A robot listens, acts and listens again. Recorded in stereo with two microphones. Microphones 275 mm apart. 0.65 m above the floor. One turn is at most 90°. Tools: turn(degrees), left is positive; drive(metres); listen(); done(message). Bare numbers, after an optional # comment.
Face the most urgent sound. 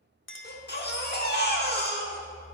# The baby crying: about 35° left or 145° left.
turn(35)
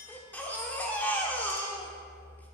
done("Facing the baby crying, 1 to 2 m away.")